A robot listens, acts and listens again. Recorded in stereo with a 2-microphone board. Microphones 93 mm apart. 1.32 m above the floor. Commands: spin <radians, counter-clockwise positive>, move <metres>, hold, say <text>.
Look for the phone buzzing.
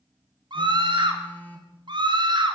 spin 0.26
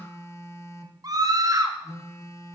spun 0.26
spin 2.62
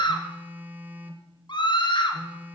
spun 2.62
spin -0.35
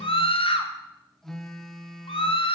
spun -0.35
say Found it: a phone buzzing, straight ahead.